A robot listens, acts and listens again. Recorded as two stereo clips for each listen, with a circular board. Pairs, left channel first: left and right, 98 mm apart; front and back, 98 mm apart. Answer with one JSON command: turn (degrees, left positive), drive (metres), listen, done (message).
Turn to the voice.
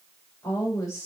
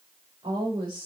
{"turn": 145}
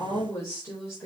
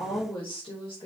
{"turn": 25}
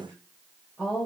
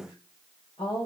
{"done": "Facing the woman speaking."}